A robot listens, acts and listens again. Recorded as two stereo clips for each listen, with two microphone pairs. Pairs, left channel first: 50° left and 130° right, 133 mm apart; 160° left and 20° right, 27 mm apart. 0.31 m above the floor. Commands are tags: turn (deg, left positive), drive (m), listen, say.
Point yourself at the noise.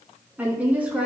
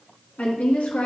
<turn deg="150"/>
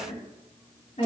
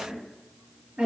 <turn deg="20"/>
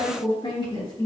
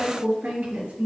<say>Facing the woman speaking.</say>